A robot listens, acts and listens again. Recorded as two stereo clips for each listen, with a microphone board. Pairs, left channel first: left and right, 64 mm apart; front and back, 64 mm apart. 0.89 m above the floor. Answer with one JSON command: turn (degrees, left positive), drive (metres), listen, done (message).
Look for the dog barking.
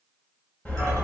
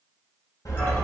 {"turn": 25}
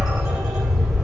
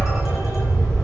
{"done": "Facing the dog barking."}